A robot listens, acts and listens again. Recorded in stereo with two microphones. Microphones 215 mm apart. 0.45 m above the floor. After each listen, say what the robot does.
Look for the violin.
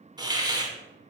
Keep listening.
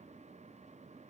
Keep listening.
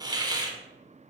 I can't make out a violin to turn to.